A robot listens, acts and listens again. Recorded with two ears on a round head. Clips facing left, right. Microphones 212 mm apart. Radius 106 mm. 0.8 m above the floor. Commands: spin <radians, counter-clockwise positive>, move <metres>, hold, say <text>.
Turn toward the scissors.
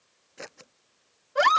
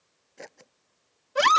spin 0.52
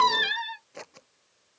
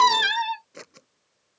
spin -0.44
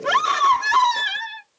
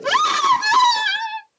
hold
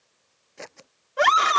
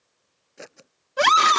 spin -0.17
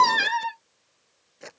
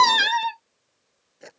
say Facing the scissors.